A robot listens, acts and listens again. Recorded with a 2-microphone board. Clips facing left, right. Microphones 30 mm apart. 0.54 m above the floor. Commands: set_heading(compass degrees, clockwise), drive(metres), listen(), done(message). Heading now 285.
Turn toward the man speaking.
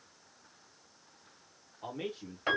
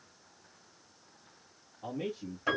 set_heading(235)
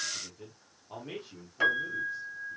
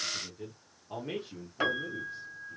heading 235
set_heading(245)
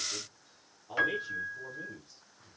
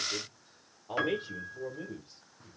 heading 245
set_heading(280)
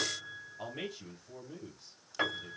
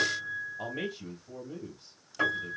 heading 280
set_heading(290)
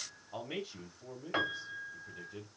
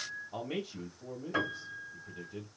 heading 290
done("Found it: a man speaking, straight ahead, 1 to 2 m away.")